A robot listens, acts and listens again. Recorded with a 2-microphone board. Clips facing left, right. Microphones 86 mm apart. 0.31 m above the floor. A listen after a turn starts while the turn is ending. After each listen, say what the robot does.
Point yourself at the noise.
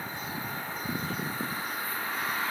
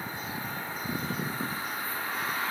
Keep listening.
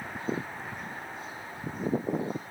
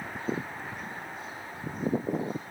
Keep listening.
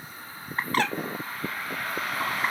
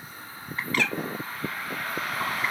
Turn 40° left.
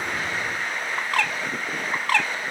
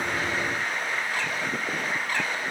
Turn 100° left.
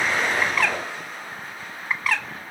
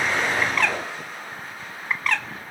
Facing the bird.